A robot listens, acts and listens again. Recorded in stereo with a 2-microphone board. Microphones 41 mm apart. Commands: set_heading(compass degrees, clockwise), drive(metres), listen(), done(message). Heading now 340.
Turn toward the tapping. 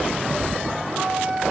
set_heading(40)
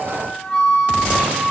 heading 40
listen()
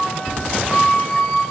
done("Facing the tapping, 2 to 4 m away.")